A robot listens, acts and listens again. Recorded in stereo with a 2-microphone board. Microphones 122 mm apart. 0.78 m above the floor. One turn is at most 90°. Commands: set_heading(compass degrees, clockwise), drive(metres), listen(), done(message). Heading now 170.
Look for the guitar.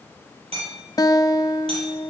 set_heading(140)
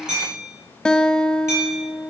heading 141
set_heading(131)
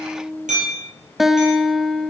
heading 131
done("Facing the guitar, under 1 m away.")